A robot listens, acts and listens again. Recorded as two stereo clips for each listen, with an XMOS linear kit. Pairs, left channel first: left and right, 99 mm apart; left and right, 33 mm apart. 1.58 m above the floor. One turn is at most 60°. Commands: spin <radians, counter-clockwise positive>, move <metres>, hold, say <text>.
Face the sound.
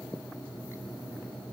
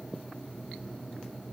hold
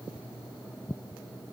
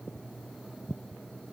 hold
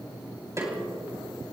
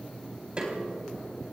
spin -0.61
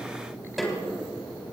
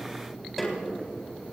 say Found it: a snare drum, straight ahead, 2 to 4 m away.